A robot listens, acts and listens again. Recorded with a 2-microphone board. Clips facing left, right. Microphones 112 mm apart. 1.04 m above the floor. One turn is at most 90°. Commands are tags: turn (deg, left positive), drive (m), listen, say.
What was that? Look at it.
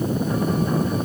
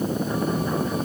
<listen/>
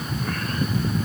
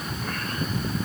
<listen/>
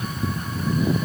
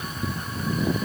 <say>I can't make out anything to turn to.</say>